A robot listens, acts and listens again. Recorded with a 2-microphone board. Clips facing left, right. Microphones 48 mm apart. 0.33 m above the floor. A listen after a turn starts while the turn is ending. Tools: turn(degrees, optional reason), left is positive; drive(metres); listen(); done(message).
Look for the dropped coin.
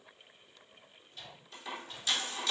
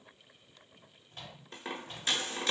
turn(degrees=-40, reason="The dropped coin: about 40° right or 140° right.")
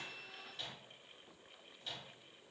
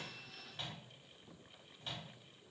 listen()
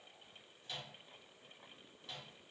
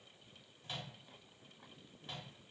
done("I heard a dropped coin, but can't make it out now. It was about straight ahead or 100° right.")